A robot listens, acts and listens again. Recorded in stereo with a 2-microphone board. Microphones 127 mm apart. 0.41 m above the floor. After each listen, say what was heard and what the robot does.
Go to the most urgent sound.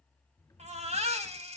The baby crying: about 60° right or 120° right. Turn 60° right.
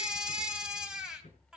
Drive 1.0 m forward.
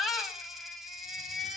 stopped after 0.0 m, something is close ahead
Blocked. The baby crying is further on, straight ahead.